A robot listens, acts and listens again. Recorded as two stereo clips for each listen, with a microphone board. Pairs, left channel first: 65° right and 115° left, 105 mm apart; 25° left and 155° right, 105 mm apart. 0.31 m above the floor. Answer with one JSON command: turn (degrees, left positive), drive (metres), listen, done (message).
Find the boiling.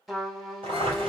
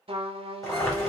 {"turn": 80}
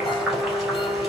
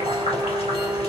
{"turn": 25}
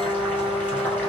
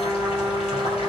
{"listen": true}
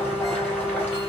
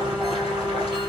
{"listen": true}
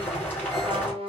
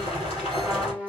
{"done": "Found it: boiling, straight ahead."}